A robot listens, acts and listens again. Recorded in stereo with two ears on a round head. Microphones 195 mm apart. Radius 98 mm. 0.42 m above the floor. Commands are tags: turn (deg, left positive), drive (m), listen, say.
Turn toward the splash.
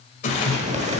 <turn deg="35"/>
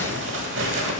<listen/>
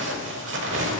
<say>I heard a splash, but can't make it out now. It was about straight ahead or 110° left.</say>